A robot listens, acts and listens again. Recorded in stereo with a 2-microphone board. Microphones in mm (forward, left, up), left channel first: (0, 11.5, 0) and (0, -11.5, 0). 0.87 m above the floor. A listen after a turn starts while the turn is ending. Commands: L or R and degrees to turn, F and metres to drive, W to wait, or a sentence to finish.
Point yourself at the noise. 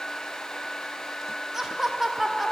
R30
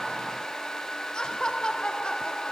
L45
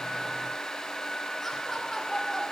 L15
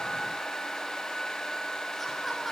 W
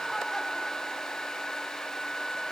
W
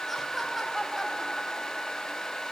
Found it: laughter, straight ahead.